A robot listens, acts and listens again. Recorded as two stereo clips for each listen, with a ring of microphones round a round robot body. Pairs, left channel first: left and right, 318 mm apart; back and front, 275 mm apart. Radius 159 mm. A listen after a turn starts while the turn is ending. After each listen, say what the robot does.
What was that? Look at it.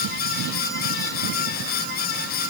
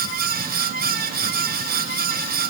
Keep listening.
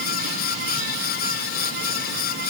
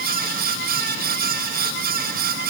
Keep listening.
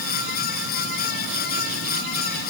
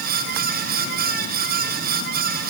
I can't make out anything.